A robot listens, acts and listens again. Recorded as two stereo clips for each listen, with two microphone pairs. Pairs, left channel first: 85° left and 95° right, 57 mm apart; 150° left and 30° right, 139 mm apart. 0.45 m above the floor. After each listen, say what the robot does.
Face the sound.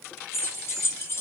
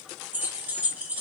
Turn 50° left.
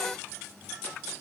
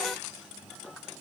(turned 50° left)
Keep listening.
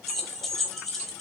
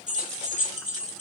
Found it: keys jangling, straight ahead.